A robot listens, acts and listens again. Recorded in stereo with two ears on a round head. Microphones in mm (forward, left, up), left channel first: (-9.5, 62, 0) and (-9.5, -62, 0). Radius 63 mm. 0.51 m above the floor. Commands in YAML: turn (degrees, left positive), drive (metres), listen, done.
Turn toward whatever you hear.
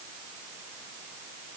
listen: true
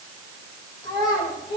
turn: 35
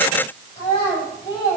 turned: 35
turn: 45
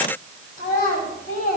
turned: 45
turn: 105
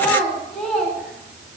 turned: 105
done: "Facing the child speaking, 2 to 4 m away."